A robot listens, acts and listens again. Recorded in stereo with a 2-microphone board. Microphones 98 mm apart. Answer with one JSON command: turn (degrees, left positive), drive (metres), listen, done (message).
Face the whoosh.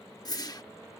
{"turn": 40}
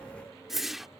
{"done": "Facing the whoosh."}